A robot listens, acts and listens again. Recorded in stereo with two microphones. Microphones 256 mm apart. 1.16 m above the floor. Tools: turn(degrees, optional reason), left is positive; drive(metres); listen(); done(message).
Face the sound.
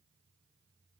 listen()
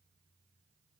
listen()
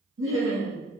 turn(degrees=-60, reason="The laughter: about 60° right or 120° right.")
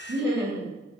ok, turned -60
turn(degrees=-40, reason="So it is at 40° right.")
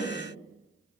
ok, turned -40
turn(degrees=10, reason="The laughter is now 10° left.")
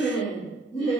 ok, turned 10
turn(degrees=20, reason="The laughter is now 20° left.")
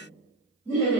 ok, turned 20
done("Found it: laughter, straight ahead.")